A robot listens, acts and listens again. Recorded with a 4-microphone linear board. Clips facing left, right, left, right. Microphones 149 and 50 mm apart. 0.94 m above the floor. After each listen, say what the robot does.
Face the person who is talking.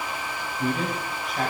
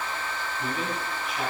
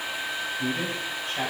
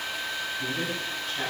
Turn 40° left.
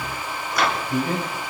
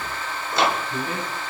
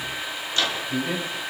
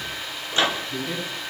Turn 100° left.
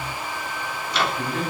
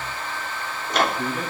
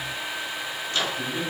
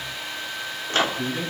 Turn 10° right.
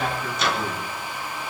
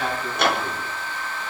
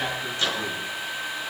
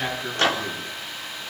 Facing the man speaking, over 4 m away.